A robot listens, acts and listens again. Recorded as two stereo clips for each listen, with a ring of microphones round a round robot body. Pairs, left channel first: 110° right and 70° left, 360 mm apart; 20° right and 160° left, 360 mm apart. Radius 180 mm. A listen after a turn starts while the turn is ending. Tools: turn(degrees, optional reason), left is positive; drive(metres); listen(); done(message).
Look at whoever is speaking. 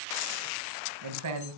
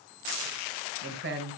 turn(degrees=100, reason="The man speaking: 100° left.")
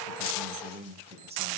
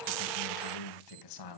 done("Found it: a man speaking, straight ahead, 2 to 4 m away.")